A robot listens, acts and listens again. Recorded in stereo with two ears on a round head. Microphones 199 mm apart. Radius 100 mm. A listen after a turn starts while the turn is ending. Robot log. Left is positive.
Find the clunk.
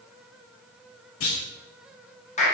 note: The clunk: about 65° left or 115° left.
cmd yaw +65
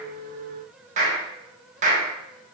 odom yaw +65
cmd idle
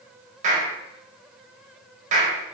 end: I heard a clunk, but can't make it out now. It was about straight ahead or 50° left.